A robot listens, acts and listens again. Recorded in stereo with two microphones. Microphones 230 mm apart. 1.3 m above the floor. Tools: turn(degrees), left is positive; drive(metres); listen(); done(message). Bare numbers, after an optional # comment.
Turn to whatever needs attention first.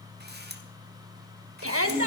# The shout: about 75° right or 105° right.
turn(-75)
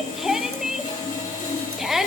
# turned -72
done("Found it: a shout, straight ahead, 1 to 2 m away.")